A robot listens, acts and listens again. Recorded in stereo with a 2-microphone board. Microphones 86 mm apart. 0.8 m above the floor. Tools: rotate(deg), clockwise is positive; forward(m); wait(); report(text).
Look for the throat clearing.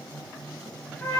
wait()
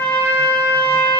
wait()
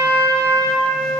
report("I can't make out throat clearing to turn to.")